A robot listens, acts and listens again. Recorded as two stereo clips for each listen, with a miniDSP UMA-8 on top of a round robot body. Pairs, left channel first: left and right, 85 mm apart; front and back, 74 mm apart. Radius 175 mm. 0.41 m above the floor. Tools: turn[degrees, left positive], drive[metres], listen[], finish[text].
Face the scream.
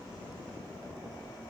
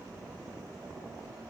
Action: listen[]
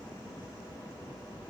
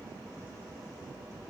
Action: listen[]
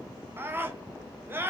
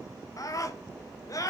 Thought: The scream: 30° right.
Action: turn[-30]
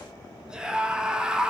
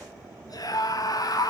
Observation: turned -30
Thought: The scream is now 10° right.
Action: turn[-10]
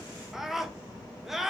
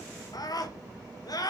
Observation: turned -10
Action: finish[Facing the scream, 1 to 2 m away.]